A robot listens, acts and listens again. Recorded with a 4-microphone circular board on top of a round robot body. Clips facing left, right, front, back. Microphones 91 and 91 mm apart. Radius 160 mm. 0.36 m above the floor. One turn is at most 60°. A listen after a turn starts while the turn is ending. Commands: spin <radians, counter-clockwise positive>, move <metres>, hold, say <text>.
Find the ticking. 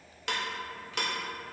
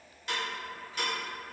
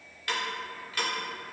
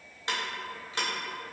spin 1.05
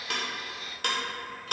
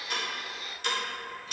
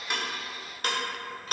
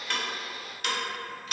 spin 0.96
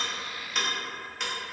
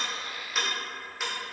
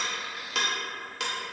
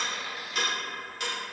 say Facing the ticking, under 1 m away.